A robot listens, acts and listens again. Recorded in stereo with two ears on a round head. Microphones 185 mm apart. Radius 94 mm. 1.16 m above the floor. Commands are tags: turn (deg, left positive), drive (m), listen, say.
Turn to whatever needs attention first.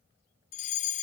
<turn deg="35"/>
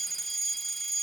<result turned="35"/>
<say>Facing the fire alarm.</say>